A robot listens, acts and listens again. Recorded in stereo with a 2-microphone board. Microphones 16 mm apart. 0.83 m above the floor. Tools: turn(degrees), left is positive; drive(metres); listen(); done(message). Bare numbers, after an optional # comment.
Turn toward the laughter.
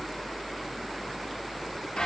listen()
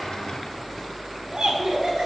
# The laughter: about 55° right or 125° right.
turn(-55)
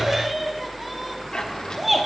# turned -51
done("Facing the laughter.")